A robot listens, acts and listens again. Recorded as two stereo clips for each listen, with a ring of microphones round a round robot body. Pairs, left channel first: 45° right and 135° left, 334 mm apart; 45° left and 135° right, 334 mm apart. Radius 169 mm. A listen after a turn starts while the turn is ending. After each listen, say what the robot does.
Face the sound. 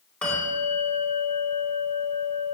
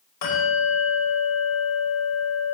Turn 40° left.
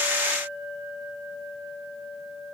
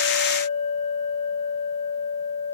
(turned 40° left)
Facing the bell.